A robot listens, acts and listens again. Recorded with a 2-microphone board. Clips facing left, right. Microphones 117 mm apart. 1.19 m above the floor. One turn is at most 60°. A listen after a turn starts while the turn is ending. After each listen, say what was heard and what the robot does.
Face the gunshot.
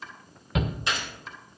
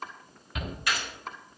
The gunshot: about 25° left or 155° left. Turn 25° left.
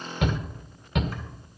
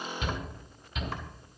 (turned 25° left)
Keep listening.
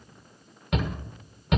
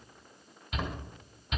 I heard a gunshot, but can't make it out now. It was about straight ahead or 130° left.